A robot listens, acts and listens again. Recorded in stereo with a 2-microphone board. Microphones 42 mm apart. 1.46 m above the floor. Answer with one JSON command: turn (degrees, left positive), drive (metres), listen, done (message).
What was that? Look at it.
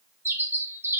{"turn": -65}
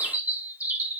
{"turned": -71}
{"turn": -40}
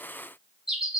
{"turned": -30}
{"turn": -10}
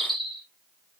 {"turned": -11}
{"done": "Found it: a bird, straight ahead, under 1 m away."}